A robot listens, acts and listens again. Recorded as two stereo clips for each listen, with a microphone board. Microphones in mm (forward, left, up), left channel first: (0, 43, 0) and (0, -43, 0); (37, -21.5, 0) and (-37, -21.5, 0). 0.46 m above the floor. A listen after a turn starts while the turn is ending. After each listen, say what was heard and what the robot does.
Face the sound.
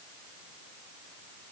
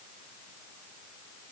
Keep listening.
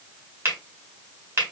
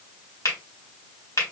The finger snap: 35° right. Turn 35° right.
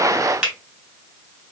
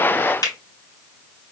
The finger snap is now 10° right. Turn 10° right.
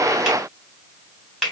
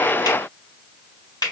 Found it: a finger snap, straight ahead, 1 to 2 m away.